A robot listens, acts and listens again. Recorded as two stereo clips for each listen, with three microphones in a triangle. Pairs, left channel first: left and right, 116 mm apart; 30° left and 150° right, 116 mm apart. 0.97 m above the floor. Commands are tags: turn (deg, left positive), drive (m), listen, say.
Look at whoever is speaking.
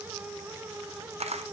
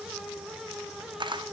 <listen/>
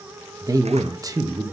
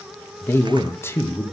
<turn deg="-35"/>
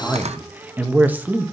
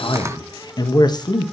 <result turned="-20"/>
<turn deg="-15"/>
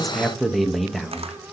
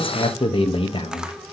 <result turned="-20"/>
<say>Found it: a man speaking, straight ahead, 1 to 2 m away.</say>